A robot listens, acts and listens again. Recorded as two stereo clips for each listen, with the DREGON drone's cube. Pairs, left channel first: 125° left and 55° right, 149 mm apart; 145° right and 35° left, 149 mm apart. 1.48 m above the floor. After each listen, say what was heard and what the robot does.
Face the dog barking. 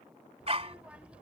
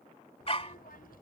The dog barking: 100° right. Turn 100° right.
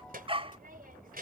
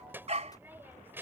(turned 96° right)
Facing the dog barking.